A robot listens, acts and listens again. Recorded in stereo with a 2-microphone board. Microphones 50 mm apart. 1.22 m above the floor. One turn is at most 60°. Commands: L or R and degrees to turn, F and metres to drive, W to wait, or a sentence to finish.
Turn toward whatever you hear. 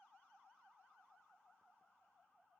W
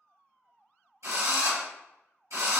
R60
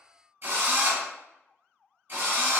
R45
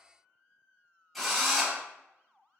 Facing the drill, 1 to 2 m away.